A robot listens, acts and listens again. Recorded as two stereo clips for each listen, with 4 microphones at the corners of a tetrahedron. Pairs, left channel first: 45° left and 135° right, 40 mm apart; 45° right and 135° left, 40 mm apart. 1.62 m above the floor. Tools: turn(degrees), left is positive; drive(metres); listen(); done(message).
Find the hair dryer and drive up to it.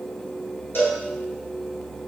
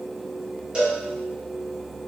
listen()
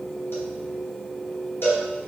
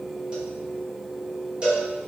listen()
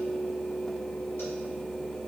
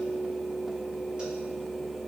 done("I can't make out a hair dryer to turn to.")